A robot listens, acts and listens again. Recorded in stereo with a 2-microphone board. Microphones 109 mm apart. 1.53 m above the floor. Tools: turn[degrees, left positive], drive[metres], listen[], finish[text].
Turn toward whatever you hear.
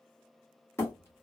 Thought: The hammering: about 25° left or 155° left.
Action: turn[25]
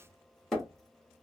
Action: finish[Found it: hammering, straight ahead.]